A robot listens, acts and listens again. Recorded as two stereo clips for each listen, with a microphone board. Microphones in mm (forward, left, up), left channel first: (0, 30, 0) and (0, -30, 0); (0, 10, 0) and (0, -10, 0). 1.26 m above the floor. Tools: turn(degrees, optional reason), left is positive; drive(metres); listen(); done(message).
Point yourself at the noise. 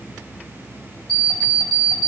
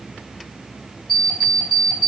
turn(degrees=30)
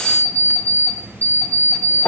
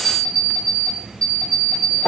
turn(degrees=135, reason="So it is at 135° left.")
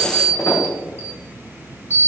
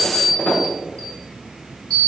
turn(degrees=50, reason="The alarm clock is now 50° left.")
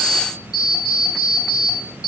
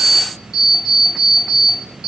done("Facing the alarm clock.")